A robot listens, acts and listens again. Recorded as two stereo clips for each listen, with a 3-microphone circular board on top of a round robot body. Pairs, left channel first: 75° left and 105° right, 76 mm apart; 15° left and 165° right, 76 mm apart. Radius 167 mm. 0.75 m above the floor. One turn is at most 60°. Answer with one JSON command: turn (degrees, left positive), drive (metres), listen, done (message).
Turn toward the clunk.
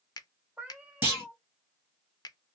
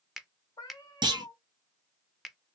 {"turn": -60}
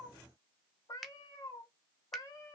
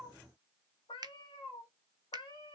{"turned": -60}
{"turn": -60}
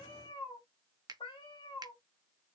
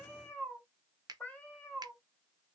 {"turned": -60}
{"turn": -40}
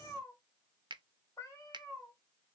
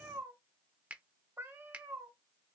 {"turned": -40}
{"done": "I heard a clunk from this way, but can't make it out now."}